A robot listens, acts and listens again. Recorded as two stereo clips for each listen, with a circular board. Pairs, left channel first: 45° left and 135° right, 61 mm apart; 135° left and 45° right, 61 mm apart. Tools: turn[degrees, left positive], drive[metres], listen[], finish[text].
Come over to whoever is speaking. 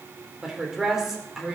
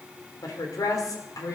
Thought: The woman speaking: 140° left.
Action: turn[140]
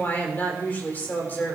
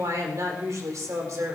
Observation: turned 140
Thought: The woman speaking is now 15° right.
Action: turn[-15]
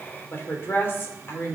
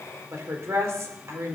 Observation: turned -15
Action: drive[1.0]
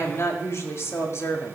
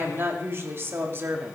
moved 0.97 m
Action: drive[1.0]
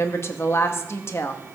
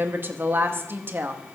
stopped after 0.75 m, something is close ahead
Action: finish[Arrived at the woman speaking, straight ahead.]